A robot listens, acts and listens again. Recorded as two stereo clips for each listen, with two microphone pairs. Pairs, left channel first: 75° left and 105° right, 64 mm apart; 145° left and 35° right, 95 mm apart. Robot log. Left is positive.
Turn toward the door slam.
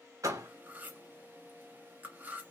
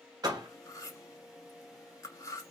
note: The door slam: 80° right.
cmd yaw -80
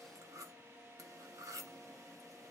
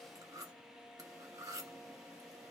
end: Facing where the door slam came from. I can't hear it now.